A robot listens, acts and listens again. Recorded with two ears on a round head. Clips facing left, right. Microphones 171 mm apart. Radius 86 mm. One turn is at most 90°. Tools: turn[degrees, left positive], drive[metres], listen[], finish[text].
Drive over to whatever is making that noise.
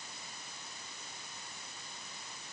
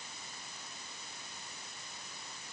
Action: listen[]
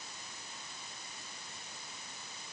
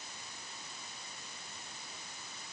Action: listen[]
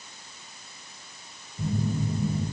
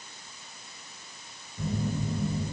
Thought: The phone buzzing: about 65° right or 115° right.
Action: turn[-65]
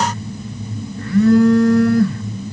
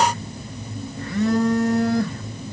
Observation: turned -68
Thought: So it is at 20° right.
Action: turn[-20]
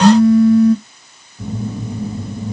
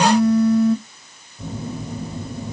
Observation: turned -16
Action: drive[1.0]
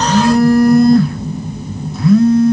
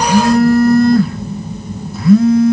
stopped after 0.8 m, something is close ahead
Action: finish[I am next to the phone buzzing.]